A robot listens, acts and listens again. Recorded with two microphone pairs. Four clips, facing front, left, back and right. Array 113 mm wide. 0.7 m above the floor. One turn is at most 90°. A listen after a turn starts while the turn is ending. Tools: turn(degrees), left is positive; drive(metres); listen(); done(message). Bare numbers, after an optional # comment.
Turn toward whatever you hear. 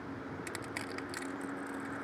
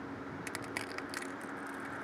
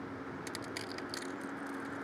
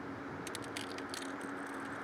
# The crushing: 70° left.
turn(70)
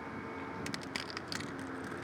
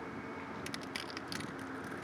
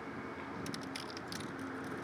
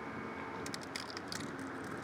# The crushing is now 15° left.
turn(15)
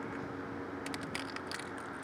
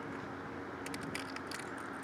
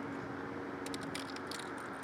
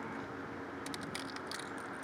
done("Facing the crushing.")